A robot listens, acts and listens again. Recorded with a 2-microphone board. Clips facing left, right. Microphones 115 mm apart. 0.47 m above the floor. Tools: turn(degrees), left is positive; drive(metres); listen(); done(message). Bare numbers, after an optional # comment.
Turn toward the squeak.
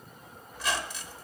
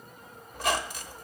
# The squeak: about 50° right or 130° right.
turn(-50)
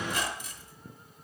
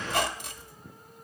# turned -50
# So it is at 75° right.
turn(-75)
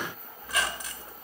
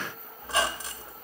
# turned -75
# The squeak is now 30° right.
turn(-30)
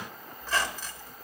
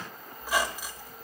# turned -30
# The squeak is now 15° right.
turn(-15)
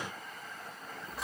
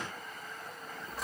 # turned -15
done("Facing the squeak.")